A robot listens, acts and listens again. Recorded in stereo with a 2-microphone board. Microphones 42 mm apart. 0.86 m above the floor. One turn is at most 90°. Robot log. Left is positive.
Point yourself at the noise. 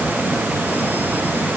cmd idle
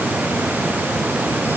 cmd idle
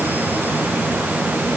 end: I can't make out anything to turn to.